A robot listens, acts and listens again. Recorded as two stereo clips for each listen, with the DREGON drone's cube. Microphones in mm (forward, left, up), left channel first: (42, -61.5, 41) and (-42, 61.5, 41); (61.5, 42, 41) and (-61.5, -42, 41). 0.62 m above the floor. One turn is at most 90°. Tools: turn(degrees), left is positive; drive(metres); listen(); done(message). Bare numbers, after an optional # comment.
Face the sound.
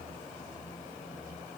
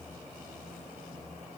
listen()
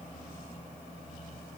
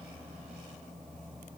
listen()
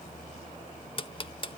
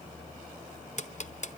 done("Found it: ticking, straight ahead.")